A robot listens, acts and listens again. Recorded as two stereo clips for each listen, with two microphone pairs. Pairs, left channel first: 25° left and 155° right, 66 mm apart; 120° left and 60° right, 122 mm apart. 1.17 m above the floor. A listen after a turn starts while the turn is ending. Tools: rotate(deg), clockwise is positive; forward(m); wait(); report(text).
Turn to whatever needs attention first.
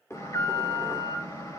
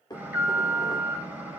rotate(-15)
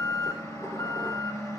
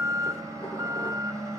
report("Facing the alarm, over 4 m away.")